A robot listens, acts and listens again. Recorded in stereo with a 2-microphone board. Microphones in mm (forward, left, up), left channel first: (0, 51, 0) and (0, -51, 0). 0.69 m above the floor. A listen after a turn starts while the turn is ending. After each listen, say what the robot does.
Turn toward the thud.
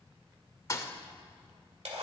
Turn 30° left.
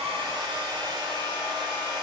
Keep listening.
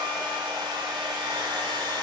I heard a thud, but can't make it out now. It was about straight ahead or 120° left.